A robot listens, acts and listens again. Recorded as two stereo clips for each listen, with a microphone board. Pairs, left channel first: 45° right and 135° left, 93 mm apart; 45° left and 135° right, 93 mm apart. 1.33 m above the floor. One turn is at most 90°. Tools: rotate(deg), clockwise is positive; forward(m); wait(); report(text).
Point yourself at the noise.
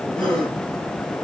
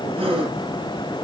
rotate(90)
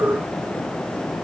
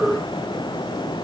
rotate(35)
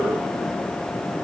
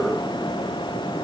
report("Facing where the gasp came from. I can't hear it now.")